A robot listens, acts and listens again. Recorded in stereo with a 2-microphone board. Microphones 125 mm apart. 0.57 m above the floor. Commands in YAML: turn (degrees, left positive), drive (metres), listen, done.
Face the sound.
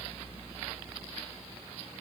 listen: true
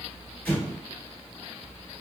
turn: 15
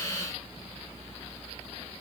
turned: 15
listen: true
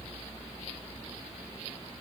done: "I heard an explosion, but can't make it out now. It was about straight ahead or 150° left."